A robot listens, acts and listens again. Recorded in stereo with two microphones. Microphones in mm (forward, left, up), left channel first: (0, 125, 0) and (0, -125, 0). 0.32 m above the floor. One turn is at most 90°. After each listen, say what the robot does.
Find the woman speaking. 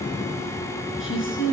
Turn 50° left.
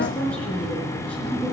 Found it: a woman speaking, straight ahead, over 4 m away.